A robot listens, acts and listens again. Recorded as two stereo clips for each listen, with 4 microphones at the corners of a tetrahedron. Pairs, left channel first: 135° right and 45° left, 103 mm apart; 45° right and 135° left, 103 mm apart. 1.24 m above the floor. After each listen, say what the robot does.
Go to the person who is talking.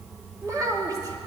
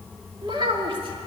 Turn 100° left.
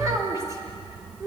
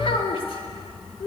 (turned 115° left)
Turn 15° right.
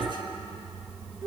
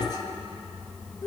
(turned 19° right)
Drive 1.0 m forward.
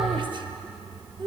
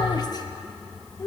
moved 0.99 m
Drive 1.0 m forward.
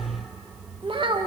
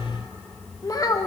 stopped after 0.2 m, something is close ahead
Turn 10° left.
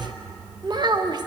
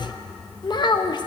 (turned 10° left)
I am next to the child speaking.